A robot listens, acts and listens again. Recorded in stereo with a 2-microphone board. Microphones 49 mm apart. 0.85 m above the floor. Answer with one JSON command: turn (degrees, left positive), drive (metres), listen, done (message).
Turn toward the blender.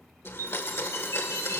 {"turn": 60}
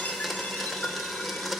{"done": "Facing the blender, 1 to 2 m away."}